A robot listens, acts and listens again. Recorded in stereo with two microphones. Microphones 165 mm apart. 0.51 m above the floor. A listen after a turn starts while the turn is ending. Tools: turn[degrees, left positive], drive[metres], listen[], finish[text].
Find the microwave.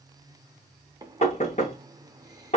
Thought: The microwave: about 25° right or 155° right.
Action: turn[-25]
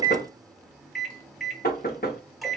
Action: finish[Facing the microwave, under 1 m away.]